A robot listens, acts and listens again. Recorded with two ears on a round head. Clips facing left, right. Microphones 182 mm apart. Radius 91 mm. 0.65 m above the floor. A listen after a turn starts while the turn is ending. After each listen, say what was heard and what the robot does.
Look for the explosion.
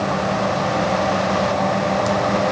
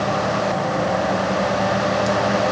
Keep listening.
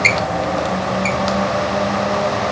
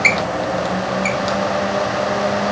Keep listening.
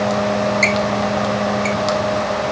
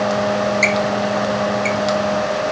I can't make out an explosion to turn to.